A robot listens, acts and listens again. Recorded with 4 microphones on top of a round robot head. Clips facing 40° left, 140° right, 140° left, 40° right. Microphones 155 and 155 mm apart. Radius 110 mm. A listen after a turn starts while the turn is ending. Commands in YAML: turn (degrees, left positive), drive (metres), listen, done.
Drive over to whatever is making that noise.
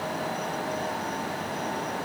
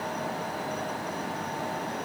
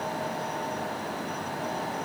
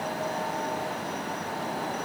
listen: true
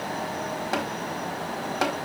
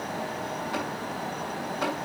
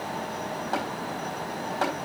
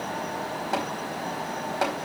turn: 40
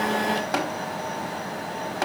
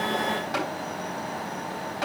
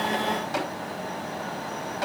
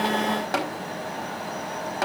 drive: 1.0
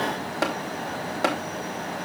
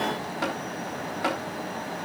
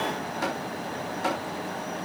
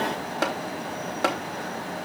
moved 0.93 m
turn: -10
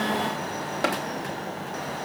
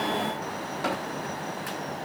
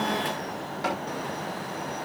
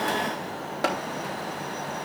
drive: 1.0
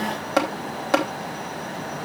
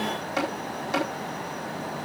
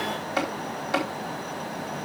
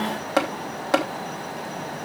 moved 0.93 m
drive: 1.0
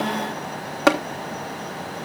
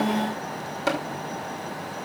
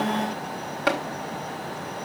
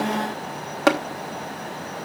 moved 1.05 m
drive: 1.0
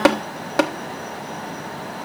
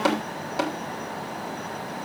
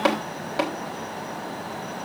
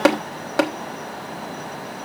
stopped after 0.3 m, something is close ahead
done: "Arrived at the tapping, straight ahead."